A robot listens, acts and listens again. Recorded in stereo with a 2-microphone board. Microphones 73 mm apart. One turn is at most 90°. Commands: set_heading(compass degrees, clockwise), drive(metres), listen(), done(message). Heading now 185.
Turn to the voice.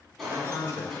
set_heading(140)
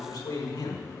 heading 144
set_heading(54)
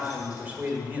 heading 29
set_heading(54)
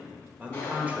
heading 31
set_heading(51)
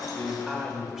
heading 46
done("Facing the man speaking.")